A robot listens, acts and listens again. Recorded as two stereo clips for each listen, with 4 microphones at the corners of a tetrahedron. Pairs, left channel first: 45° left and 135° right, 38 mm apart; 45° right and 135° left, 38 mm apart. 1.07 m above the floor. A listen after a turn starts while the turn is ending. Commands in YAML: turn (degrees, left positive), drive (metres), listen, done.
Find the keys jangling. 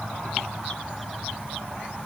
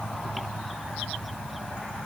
listen: true
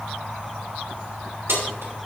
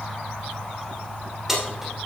turn: -150
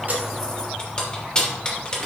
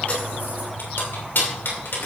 turn: -20
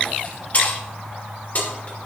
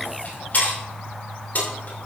done: "Facing the keys jangling."